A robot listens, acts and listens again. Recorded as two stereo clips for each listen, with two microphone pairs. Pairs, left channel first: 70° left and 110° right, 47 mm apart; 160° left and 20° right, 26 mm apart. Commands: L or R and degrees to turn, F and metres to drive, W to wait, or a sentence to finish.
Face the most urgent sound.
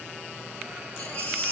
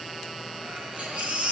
L20
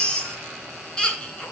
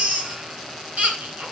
Facing the baby crying, 2 to 4 m away.